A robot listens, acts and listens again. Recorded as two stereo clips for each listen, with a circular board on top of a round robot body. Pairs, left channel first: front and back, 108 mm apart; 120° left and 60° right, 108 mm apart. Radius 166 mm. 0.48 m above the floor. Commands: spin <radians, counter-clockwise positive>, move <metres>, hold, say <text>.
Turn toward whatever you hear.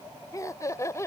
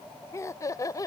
spin 1.13
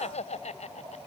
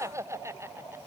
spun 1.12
say Facing the laughter.